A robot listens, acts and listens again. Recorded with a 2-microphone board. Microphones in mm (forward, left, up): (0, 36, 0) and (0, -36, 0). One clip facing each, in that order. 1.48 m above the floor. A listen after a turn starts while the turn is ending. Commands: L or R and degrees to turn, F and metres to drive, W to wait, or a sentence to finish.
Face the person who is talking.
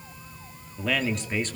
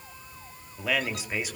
R30
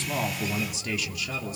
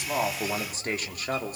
R130
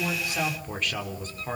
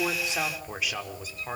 Facing the man speaking.